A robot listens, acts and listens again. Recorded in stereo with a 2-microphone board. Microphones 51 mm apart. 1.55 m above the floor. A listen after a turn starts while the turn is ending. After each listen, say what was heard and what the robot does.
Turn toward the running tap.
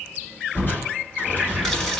Turn 30° left.
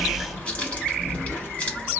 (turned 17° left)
So it is at 150° left. Turn 150° left.
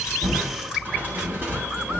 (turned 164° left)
Nothing new. It was at 15° right. Turn 15° right.
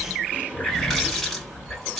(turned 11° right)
Facing the running tap.